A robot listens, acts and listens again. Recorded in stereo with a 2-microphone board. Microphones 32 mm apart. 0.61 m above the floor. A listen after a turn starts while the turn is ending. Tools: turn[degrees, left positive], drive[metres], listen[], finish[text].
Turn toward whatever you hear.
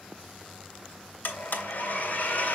Thought: The blender: about 65° left or 115° left.
Action: turn[65]
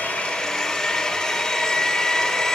Thought: So it is at 15° left.
Action: turn[15]
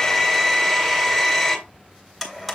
Action: finish[Found it: a blender, straight ahead, 2 to 4 m away.]